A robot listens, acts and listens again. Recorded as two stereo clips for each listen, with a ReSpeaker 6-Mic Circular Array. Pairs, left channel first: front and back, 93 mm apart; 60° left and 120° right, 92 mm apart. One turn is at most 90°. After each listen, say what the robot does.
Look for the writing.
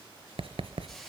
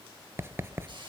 Turn 90° left.
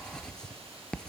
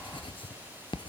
Turn 80° left.
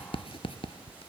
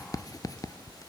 Turn 10° left.
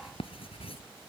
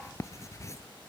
Facing the writing, under 1 m away.